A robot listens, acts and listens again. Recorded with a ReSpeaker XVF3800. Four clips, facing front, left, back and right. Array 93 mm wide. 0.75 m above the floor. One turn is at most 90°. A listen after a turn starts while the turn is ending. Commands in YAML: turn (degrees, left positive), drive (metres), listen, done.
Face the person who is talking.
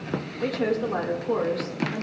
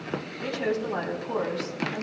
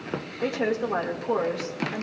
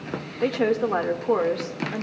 turn: -90
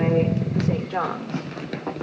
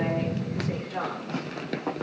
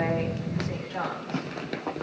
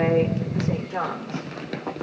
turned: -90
turn: -25
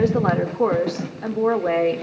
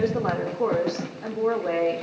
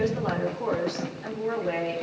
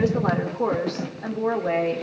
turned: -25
done: "Found it: a woman speaking, straight ahead, 1 to 2 m away."